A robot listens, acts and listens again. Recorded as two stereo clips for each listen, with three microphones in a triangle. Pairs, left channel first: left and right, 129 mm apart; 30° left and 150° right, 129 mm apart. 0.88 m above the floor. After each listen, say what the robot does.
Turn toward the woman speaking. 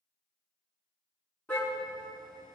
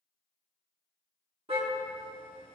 Keep listening.
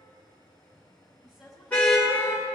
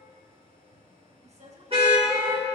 Turn 180° left.
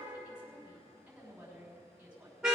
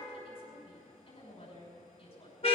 Turn 10° right.
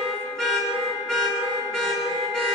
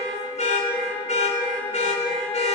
Keep listening.
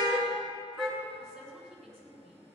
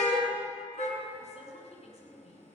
Found it: a woman speaking, straight ahead.